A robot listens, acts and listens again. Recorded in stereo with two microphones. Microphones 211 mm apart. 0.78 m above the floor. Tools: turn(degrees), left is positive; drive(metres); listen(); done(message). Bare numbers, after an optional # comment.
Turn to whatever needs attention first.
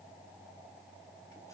listen()
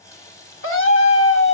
# The scream: about 75° left or 105° left.
turn(75)
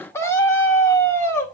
# So it is at 10° left.
turn(10)
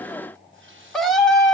done("Facing the scream, 2 to 4 m away.")